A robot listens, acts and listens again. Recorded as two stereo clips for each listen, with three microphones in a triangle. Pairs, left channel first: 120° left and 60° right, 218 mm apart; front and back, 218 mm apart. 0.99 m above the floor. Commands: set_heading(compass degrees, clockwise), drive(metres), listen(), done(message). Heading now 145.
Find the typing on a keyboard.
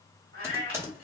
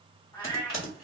set_heading(125)
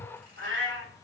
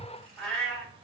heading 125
listen()
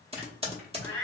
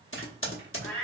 done("Facing the typing on a keyboard, under 1 m away.")